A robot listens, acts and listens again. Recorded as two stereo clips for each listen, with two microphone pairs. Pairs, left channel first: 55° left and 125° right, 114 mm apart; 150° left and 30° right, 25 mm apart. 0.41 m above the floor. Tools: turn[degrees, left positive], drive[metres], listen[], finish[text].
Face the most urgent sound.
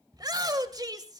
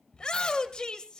Thought: The shout: 170° right.
Action: turn[-170]
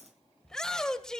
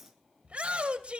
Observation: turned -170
Thought: The shout is now 25° right.
Action: turn[-25]
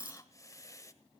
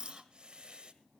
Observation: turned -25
Action: listen[]
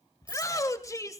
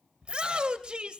Action: finish[Facing the shout.]